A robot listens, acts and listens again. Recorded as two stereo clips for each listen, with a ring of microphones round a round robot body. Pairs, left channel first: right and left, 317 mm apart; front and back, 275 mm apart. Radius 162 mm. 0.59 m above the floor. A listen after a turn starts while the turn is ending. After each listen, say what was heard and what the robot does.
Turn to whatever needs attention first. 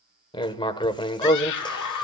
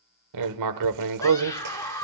The scream: 80° right. Turn 80° right.
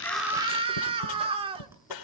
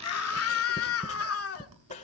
The scream is now 20° left. Turn 20° left.
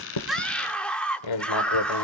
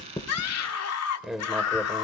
Found it: a scream, straight ahead, 1 to 2 m away.